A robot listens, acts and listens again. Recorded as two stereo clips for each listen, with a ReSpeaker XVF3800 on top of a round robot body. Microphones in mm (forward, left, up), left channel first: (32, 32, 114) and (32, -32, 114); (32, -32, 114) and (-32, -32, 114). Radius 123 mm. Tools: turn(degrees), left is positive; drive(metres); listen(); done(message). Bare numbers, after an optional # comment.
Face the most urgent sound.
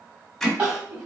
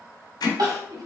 # The crying: 155° right.
turn(-155)
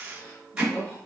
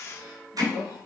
listen()
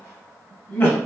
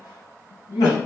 # The crying is now 30° left.
turn(30)
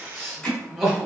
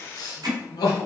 done("Facing the crying.")